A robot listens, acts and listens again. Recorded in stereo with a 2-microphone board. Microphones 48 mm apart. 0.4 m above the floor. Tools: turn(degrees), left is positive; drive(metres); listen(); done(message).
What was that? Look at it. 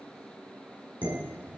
turn(degrees=-40)
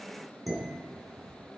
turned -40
done("Facing the dishes clattering, 2 to 4 m away.")